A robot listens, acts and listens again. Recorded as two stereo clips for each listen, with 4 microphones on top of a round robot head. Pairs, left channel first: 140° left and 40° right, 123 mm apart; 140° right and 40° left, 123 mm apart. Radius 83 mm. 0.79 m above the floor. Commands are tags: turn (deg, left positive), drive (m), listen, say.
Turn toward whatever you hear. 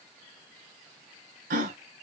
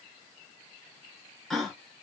<turn deg="-50"/>
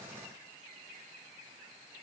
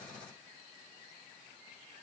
<say>Facing where the gasp came from. I can't hear it now.</say>